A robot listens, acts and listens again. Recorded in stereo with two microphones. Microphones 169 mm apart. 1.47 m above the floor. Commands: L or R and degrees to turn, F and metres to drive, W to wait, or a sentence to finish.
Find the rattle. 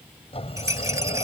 R20
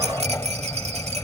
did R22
R140
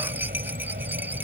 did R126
R15
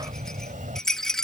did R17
Found it: a rattle, straight ahead.